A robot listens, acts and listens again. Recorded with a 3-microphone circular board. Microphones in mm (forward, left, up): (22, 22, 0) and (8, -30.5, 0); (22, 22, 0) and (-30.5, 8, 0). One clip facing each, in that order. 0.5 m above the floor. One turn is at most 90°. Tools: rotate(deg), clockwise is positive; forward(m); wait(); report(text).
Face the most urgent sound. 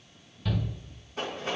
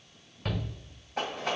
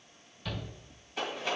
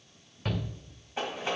rotate(90)
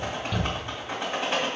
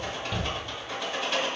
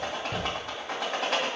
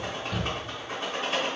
rotate(20)
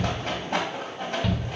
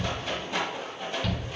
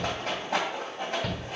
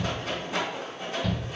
report("Facing the shout, 1 to 2 m away.")